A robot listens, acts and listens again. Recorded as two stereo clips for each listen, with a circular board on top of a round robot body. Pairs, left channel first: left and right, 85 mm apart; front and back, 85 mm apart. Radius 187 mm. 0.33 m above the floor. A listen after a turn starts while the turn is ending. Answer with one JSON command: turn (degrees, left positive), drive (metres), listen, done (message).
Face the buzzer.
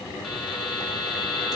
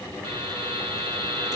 {"turn": 180}
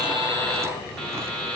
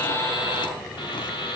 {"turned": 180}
{"turn": 10}
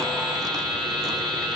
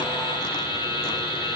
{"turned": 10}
{"done": "Facing the buzzer, over 4 m away."}